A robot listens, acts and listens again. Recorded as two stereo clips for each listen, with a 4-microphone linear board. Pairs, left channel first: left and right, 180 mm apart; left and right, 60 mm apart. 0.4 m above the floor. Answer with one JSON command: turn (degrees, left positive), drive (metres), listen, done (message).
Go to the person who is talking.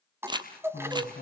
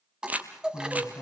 {"turn": 60}
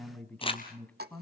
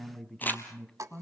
{"turn": 10}
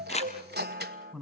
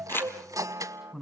{"drive": 1.0}
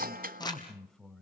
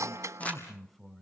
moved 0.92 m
{"drive": 1.0}
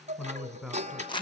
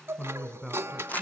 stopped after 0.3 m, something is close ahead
{"done": "I am next to the man speaking."}